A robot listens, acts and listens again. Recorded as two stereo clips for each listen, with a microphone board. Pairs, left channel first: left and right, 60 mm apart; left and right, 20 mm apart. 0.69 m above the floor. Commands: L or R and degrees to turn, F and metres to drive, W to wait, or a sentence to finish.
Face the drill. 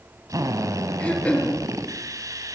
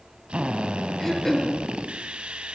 R70
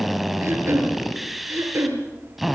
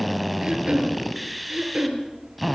Found it: a drill, straight ahead, 2 to 4 m away.